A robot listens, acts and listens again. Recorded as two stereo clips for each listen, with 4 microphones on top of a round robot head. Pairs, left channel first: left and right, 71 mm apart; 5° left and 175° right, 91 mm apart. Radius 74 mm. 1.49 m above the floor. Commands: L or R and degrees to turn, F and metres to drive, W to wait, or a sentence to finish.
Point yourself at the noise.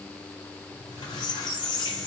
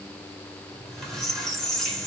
L90
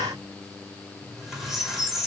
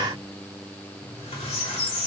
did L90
Found it: a squeak, straight ahead.